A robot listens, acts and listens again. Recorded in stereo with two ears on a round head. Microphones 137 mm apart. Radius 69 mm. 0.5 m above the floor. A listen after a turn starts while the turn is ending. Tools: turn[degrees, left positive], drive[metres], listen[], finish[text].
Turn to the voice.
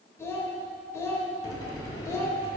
Thought: The child speaking: about 20° left or 160° left.
Action: turn[20]
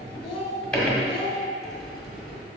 Thought: So it is at 140° left.
Action: turn[140]
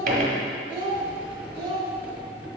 Thought: The child speaking is now 35° right.
Action: turn[-35]
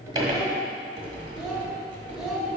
Action: finish[Facing the child speaking, 1 to 2 m away.]